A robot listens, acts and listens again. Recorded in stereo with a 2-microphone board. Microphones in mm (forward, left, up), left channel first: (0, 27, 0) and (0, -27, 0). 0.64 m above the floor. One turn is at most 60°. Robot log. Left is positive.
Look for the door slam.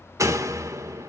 note: The door slam: about 70° right or 110° right.
cmd yaw -60
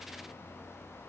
cmd idle
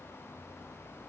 end: I heard a door slam, but can't make it out now. It was about 10° right or 50° right.